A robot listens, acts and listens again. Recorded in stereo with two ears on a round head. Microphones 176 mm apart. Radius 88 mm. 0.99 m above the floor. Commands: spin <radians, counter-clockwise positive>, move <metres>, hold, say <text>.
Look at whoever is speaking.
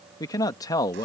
spin 0.35
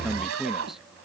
say Found it: a man speaking, straight ahead.